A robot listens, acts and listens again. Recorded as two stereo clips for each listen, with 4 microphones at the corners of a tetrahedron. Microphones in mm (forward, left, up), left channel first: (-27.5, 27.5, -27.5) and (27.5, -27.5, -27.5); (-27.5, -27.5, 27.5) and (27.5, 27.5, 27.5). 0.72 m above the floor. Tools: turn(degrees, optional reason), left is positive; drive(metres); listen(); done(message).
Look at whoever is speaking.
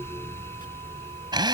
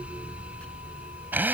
listen()
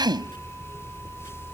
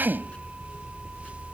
listen()
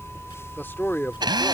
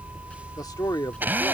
turn(degrees=-165, reason="The man speaking: 165° right.")
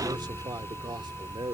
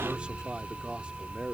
turn(degrees=-35, reason="The man speaking is now 35° right.")
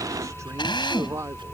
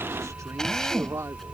done("Facing the man speaking.")